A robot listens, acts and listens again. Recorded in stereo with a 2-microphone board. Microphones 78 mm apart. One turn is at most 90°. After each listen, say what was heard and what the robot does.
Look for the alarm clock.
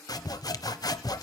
Keep listening.
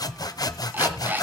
The alarm clock: about 25° right or 155° right. Turn 25° right.
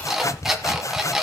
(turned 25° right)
Found it: an alarm clock, straight ahead.